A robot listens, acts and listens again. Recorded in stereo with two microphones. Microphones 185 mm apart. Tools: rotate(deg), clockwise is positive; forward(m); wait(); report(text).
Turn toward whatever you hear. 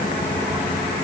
wait()
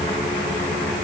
wait()
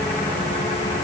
report("I can't make out anything.")